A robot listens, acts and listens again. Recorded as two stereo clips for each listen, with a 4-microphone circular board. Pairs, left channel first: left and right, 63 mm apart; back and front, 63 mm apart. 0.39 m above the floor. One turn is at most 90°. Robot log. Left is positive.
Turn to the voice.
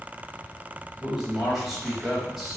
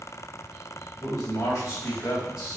note: The man speaking: 175° right.
cmd yaw -90
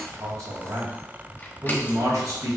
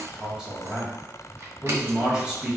note: The man speaking is now 80° right.
cmd yaw -80
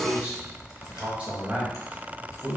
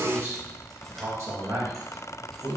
note: The man speaking is now 20° right.
cmd yaw -20
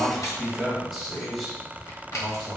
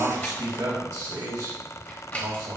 end: Facing the man speaking.